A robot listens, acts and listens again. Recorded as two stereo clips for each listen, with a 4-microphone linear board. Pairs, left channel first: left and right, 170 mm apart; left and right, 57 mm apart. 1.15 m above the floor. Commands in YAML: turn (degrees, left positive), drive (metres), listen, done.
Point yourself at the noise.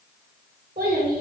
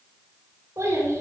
turn: -65
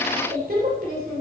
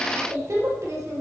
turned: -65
turn: -65
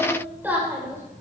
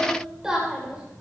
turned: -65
turn: -15
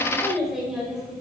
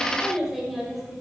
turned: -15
done: "Found it: a child speaking, straight ahead."